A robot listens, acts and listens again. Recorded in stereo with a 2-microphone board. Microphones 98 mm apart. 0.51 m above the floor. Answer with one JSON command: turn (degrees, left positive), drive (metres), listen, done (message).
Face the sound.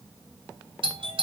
{"turn": -60}
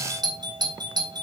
{"turn": -55}
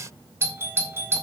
{"turn": -30}
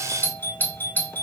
{"turn": 20}
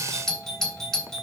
{"done": "Found it: a doorbell, straight ahead."}